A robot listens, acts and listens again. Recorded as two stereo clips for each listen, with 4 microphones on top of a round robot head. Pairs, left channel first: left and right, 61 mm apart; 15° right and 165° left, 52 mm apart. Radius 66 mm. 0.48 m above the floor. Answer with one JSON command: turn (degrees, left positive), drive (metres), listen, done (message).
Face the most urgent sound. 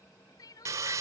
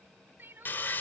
{"turn": 115}
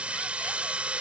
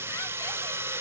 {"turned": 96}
{"turn": 20}
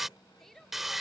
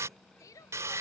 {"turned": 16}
{"done": "Facing the crying."}